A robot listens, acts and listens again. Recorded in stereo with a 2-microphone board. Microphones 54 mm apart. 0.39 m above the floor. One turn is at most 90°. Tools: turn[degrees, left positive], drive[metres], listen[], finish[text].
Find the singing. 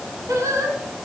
Thought: The singing: about 70° right or 110° right.
Action: turn[-70]
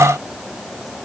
Action: listen[]
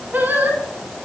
Thought: So it is at 35° right.
Action: turn[-35]
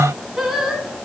Action: finish[Facing the singing.]